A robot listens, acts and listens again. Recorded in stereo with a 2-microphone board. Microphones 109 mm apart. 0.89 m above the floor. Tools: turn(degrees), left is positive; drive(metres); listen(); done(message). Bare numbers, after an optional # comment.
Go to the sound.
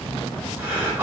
# The breathing: about 15° right or 165° right.
turn(-15)
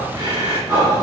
# So it is at 150° right.
turn(-150)
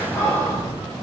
# The breathing is now 25° left.
turn(25)
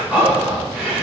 # The breathing is now 15° right.
turn(-15)
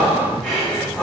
drive(1.0)
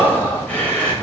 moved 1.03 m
# The breathing is now 15° left.
turn(15)
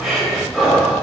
drive(1.0)
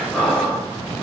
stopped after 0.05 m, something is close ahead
# The breathing is now 10° left.
turn(10)
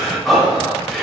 done("Arrived at the breathing, straight ahead.")